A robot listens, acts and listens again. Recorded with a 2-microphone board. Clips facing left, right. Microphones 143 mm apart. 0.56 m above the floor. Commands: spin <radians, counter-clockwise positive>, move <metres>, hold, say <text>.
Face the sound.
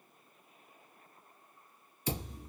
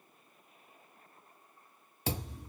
spin -1.57
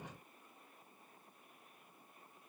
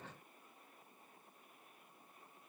say I heard a thud from this way, but can't make it out now.